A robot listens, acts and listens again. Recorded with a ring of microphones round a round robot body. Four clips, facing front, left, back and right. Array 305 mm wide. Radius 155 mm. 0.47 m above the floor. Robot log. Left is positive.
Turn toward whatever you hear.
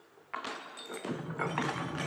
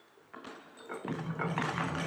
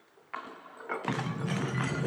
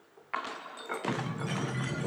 note: The sliding door: 150° right.
cmd yaw -150
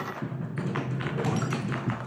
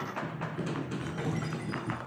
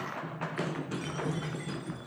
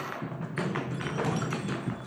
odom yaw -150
note: The sliding door is now 30° right.
cmd yaw -30
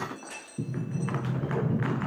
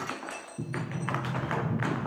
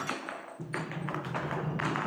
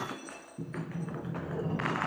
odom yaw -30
end: Found it: a sliding door, straight ahead, over 4 m away.